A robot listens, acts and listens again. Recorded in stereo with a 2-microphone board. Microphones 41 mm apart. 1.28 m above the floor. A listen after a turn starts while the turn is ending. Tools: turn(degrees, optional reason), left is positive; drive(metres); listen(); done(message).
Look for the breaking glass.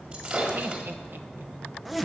turn(degrees=-35, reason="The breaking glass: about 35° right or 145° right.")
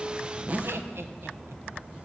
listen()
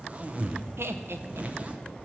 done("I heard breaking glass, but can't make it out now. It was about straight ahead or 110° right.")